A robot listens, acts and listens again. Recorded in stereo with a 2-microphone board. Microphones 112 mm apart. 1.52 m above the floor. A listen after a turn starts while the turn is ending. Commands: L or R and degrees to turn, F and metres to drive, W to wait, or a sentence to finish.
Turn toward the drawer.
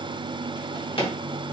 L55
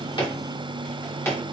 L25
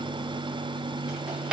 R10
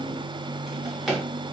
Found it: a drawer, straight ahead, 1 to 2 m away.